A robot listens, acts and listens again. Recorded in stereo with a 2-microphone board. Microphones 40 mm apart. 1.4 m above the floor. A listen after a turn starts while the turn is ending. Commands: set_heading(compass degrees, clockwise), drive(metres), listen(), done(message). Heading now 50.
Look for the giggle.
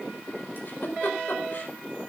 set_heading(355)
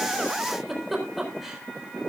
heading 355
done("Found it: a giggle, straight ahead, over 4 m away.")